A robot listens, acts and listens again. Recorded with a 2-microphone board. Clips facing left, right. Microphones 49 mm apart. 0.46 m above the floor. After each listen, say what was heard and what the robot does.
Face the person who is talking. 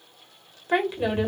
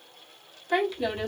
The woman speaking: about 25° left or 155° left. Turn 25° left.
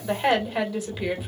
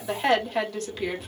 Found it: a woman speaking, straight ahead.